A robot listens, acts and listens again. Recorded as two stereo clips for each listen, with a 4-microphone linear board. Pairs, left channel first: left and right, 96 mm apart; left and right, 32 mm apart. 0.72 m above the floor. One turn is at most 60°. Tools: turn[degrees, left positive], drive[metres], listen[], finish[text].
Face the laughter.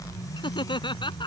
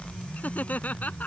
Thought: The laughter: about 55° left or 125° left.
Action: turn[55]
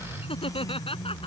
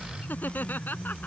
Thought: So it is at 70° left.
Action: turn[60]
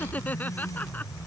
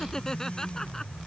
Thought: The laughter is now 15° left.
Action: turn[15]
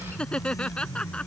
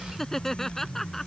Thought: The laughter is now 10° left.
Action: turn[10]
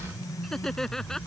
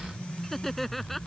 Action: finish[Facing the laughter.]